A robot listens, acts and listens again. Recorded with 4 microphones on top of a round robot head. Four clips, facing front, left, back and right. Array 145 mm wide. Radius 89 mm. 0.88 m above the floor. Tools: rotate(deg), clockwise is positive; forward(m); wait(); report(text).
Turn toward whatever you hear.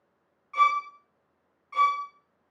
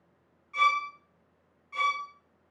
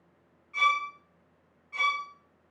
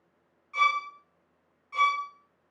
rotate(15)
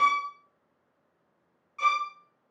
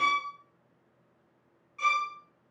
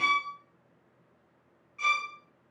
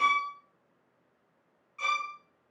report("Facing the violin.")